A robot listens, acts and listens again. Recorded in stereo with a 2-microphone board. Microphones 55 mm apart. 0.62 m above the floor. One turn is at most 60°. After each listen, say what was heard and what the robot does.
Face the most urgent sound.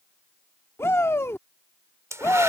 The shout: about 55° left or 125° left. Turn 55° left.
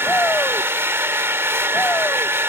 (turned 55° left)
Keep listening.
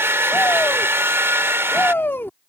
So it is at 55° left. Turn 55° left.
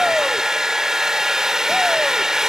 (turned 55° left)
Keep listening.
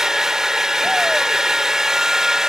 Keep listening.
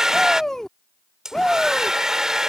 The shout is now 10° left. Turn 10° left.
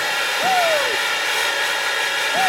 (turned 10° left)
Facing the shout.